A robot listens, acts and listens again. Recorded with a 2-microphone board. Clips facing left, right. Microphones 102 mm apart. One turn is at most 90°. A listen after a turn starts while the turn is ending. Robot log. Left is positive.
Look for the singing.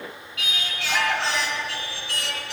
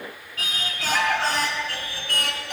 note: The singing: about 50° right or 130° right.
cmd yaw -50
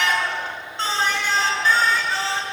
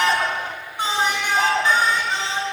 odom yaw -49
note: So it is at 20° right.
cmd yaw -20
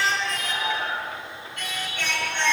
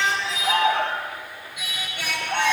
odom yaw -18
note: The singing is now 10° right.
cmd yaw -10
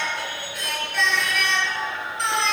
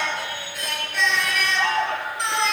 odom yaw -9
end: Found it: singing, straight ahead, over 4 m away.